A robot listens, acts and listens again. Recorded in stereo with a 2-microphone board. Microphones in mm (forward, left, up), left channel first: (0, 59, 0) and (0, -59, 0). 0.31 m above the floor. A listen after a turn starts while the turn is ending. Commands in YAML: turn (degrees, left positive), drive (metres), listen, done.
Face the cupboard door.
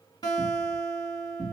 turn: 65
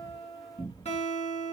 turn: 40
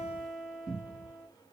done: "Facing the cupboard door, 2 to 4 m away."